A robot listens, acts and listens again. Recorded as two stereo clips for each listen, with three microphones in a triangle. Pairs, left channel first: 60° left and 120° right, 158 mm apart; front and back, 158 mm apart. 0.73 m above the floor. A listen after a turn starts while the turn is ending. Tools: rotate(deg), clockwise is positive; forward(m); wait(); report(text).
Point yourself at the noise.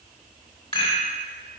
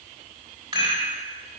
rotate(-115)
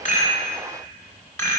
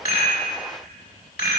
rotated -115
rotate(15)
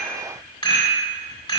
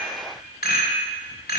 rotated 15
report("Found it: a rattle, straight ahead.")